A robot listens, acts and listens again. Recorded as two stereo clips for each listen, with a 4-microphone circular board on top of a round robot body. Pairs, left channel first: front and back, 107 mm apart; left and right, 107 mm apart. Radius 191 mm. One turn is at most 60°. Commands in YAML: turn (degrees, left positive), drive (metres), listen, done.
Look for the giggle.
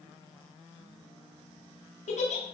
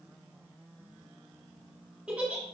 turn: -10
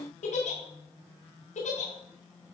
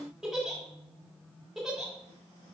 done: "Facing the giggle."